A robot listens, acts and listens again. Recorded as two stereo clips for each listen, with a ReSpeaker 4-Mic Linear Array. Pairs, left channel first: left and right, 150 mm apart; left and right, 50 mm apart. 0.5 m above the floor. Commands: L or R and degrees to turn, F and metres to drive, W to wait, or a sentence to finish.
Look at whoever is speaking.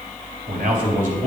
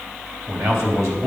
R65
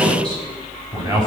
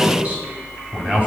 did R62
R25
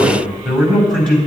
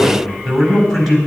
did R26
Found it: a man speaking, straight ahead.